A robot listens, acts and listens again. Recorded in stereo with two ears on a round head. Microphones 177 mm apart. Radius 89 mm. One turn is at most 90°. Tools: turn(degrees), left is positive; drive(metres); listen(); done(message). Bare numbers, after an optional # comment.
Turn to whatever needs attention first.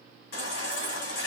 # The baby crying: about 60° left or 120° left.
turn(60)
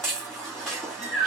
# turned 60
done("Found it: a baby crying, straight ahead.")